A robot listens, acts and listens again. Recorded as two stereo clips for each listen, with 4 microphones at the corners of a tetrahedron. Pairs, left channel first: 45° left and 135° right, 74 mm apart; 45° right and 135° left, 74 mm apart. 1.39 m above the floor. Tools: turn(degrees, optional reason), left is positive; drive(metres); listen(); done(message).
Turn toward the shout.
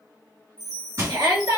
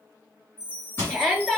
turn(degrees=-130, reason="The shout: 130° right.")
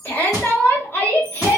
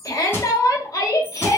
turn(degrees=-15, reason="The shout is now 15° right.")
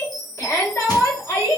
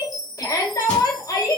done("Facing the shout, 1 to 2 m away.")